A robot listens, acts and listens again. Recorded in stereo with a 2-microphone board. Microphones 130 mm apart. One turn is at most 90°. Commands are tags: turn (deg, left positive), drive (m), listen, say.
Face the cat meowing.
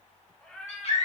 <turn deg="30"/>
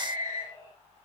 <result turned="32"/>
<turn deg="90"/>
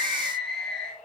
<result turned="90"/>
<turn deg="70"/>
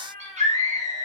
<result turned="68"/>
<turn deg="15"/>
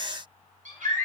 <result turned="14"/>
<listen/>
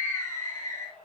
<turn deg="10"/>
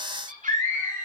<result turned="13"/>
<listen/>
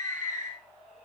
<say>Facing the cat meowing, 2 to 4 m away.</say>